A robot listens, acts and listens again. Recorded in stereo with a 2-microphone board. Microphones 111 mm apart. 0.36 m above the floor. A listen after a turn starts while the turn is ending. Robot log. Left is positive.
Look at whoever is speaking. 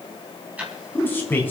note: The man speaking: about 20° left or 160° left.
cmd yaw +20
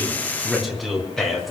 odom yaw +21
end: Facing the man speaking, over 4 m away.